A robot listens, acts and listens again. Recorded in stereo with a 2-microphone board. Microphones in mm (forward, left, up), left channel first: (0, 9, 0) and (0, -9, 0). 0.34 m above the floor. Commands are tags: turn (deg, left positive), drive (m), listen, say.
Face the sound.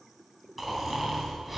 <turn deg="-30"/>
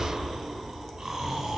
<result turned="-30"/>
<turn deg="-150"/>
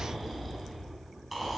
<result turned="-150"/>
<say>Found it: snoring, straight ahead, 2 to 4 m away.</say>